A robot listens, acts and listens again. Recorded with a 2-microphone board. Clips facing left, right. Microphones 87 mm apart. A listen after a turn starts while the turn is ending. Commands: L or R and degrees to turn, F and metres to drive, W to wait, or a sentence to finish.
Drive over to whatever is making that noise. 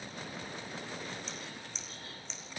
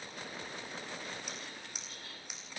R30
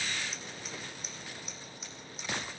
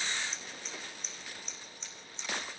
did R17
F1.0
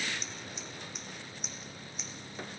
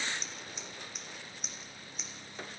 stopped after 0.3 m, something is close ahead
Blocked. The scissors is further on, straight ahead.